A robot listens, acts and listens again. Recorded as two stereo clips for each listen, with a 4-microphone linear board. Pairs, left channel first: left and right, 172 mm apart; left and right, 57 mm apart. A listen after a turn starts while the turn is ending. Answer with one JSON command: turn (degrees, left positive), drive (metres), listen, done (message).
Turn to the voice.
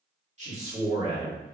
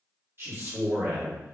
{"turn": -45}
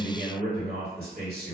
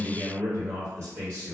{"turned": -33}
{"turn": -100}
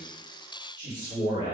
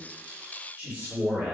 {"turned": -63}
{"turn": -35}
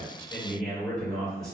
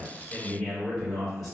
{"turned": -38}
{"done": "Facing the man speaking."}